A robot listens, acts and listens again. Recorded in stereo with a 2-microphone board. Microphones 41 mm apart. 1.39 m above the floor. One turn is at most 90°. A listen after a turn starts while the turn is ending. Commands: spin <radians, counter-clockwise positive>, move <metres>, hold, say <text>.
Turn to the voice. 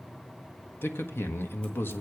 spin 1.13
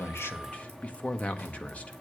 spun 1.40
spin 0.52
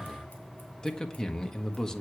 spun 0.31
spin 0.26
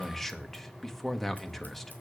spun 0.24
say Found it: a man speaking, straight ahead.